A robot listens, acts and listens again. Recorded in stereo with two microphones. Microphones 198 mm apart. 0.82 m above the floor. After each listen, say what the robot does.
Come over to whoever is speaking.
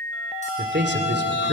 Turn 60° right.
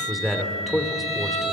Drive 1.0 m forward.
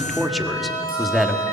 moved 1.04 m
Drive 1.0 m forward.
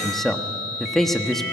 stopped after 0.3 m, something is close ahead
Arrived at the man speaking, straight ahead.